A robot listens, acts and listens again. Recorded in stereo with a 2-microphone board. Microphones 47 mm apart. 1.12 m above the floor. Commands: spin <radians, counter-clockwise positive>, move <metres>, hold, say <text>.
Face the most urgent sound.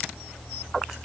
hold
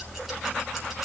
hold
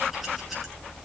say I can't make out anything urgent to turn to.